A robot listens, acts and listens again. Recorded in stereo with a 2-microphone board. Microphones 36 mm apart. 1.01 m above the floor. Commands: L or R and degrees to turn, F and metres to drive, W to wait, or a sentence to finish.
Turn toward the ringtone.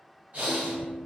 R30
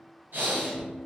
L20
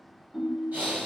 Found it: a ringtone, straight ahead, under 1 m away.